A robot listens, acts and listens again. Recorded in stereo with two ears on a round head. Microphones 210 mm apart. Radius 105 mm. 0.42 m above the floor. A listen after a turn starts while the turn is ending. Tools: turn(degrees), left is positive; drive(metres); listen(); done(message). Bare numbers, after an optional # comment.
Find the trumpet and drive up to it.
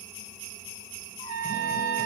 # The trumpet: about 70° right or 110° right.
turn(-70)
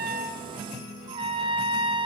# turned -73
# So it is at 25° right.
turn(-25)
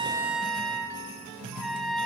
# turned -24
drive(1.0)
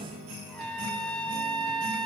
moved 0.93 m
drive(1.0)
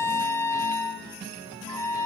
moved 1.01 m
# The trumpet is now 15° left.
turn(15)
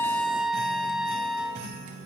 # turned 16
drive(1.0)
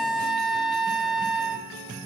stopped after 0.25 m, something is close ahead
done("I am next to the trumpet.")